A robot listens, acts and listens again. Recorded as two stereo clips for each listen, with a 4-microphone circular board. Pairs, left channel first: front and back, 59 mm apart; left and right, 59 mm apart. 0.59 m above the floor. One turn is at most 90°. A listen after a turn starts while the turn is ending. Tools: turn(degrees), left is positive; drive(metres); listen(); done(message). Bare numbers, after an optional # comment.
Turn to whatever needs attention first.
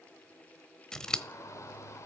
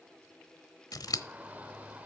# The shout: 25° right.
turn(-25)
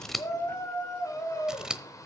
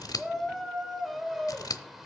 done("Facing the shout.")